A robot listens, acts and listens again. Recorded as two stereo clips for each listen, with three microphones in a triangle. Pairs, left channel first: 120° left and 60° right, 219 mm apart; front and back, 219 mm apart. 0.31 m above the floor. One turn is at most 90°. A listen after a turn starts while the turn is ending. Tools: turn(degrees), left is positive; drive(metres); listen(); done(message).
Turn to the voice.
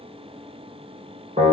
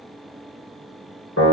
listen()
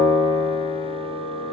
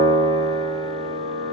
listen()
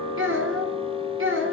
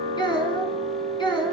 turn(degrees=-65)
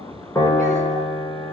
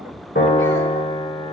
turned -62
listen()
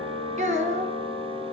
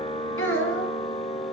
done("Found it: a child speaking, straight ahead, 1 to 2 m away.")